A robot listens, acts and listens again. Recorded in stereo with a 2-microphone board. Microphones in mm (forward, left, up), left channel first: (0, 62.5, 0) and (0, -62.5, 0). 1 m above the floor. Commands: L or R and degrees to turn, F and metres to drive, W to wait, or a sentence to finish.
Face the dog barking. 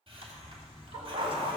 R50
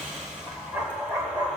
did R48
R25
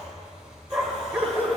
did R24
R20
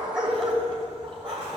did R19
R20
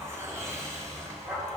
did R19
Facing the dog barking, 2 to 4 m away.